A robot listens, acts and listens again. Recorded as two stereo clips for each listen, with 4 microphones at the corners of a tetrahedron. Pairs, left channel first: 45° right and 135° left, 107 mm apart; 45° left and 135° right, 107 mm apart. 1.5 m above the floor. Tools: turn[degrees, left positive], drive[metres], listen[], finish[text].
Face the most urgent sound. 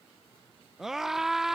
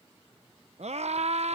Thought: The scream: 140° right.
Action: turn[-140]
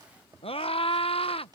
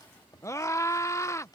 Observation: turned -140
Thought: The scream is now 15° right.
Action: turn[-15]
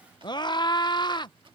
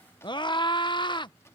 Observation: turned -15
Action: finish[Facing the scream.]